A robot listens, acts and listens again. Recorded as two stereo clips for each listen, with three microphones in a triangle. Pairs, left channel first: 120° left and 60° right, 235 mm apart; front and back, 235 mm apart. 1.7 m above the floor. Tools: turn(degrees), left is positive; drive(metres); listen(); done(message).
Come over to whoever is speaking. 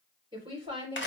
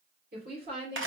turn(degrees=-130)
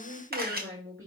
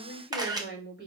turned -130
turn(degrees=-25)
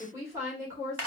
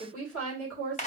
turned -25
turn(degrees=15)
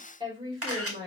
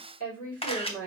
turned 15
turn(degrees=10)
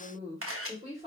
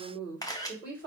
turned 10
drive(metres=1.0)
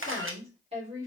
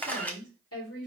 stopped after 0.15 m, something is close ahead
done("Something is in my way. I am facing the woman speaking but have not reached it.")